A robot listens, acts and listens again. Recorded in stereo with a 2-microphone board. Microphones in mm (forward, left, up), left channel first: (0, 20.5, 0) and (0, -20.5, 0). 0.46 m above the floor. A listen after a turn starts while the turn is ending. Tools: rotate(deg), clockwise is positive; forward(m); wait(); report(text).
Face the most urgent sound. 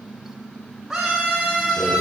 rotate(30)
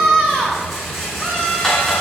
rotate(-20)
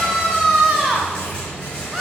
report("Found it: a scream, straight ahead, 2 to 4 m away.")